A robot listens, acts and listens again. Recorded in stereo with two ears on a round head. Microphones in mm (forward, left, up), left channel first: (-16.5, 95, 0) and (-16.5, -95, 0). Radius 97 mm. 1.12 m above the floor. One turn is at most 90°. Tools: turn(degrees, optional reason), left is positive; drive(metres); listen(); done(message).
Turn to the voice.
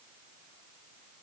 listen()
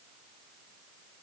listen()
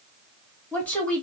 turn(degrees=30)
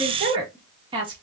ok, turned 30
turn(degrees=-25, reason="So it is at 25° right.")
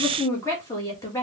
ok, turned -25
turn(degrees=15, reason="The woman speaking is now 15° left.")
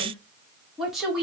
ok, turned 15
done("Found it: a woman speaking, straight ahead.")